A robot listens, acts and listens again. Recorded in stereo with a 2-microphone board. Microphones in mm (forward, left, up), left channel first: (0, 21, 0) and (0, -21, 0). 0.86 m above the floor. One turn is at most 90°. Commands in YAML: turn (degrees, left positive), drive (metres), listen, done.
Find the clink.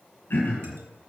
listen: true
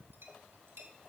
turn: -90
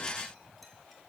listen: true
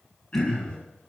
listen: true
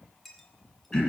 done: "Found it: a clink, straight ahead, 1 to 2 m away."